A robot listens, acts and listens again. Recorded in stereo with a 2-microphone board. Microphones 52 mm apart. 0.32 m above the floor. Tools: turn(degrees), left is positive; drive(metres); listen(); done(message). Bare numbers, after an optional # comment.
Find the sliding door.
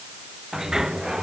turn(-30)
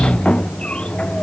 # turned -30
# So it is at 20° left.
turn(20)
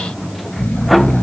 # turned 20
done("Facing the sliding door.")